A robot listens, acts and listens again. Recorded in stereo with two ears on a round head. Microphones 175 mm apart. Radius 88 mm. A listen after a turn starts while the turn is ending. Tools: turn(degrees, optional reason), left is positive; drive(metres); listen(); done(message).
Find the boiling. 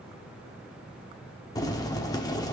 turn(degrees=20, reason="The boiling: about 20° left or 160° left.")
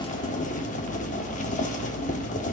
turn(degrees=140, reason="So it is at 140° left.")
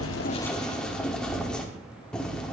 done("Facing the boiling.")